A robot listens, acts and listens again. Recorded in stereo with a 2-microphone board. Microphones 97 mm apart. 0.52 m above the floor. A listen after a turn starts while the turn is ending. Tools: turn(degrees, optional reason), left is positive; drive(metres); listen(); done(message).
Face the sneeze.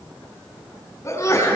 turn(degrees=30, reason="The sneeze: about 30° left or 150° left.")
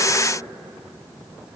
listen()
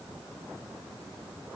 done("I heard a sneeze, but can't make it out now. It was about straight ahead or 120° left.")